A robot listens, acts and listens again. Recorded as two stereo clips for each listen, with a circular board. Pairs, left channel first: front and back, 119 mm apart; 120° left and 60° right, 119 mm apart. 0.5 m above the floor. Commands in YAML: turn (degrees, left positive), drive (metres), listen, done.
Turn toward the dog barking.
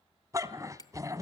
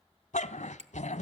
turn: 120
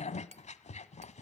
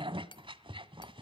turn: -15
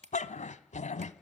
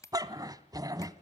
done: "Facing the dog barking, 1 to 2 m away."